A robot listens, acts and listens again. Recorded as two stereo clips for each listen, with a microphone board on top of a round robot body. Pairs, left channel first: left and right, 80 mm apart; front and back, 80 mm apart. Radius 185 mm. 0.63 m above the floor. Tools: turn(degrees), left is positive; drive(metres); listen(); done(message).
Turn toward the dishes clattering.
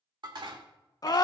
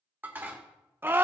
turn(degrees=-115)
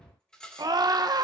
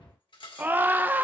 turn(degrees=10)
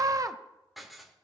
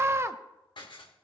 done("Facing the dishes clattering.")